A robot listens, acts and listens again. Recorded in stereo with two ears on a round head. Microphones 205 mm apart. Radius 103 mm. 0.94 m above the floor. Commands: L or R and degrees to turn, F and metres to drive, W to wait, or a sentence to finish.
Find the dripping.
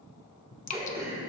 L35
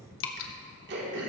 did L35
L105
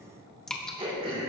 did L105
Facing the dripping.